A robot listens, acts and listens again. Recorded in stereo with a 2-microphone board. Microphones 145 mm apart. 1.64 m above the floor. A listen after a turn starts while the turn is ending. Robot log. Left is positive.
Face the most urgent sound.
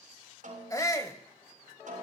note: The shout: about 25° left or 155° left.
cmd yaw +25
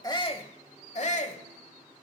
note: So it is at 125° left.
cmd yaw +125
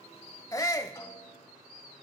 note: The shout is now 25° left.
cmd yaw +25
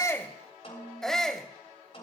end: Facing the shout.